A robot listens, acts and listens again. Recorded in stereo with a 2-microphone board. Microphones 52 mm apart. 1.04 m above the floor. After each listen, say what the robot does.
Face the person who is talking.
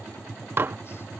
Keep listening.
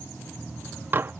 Keep listening.
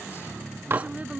Turn 25° right.
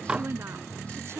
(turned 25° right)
Turn 130° right.
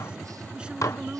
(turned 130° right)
Turn 15° right.
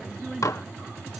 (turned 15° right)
Found it: a woman speaking, straight ahead.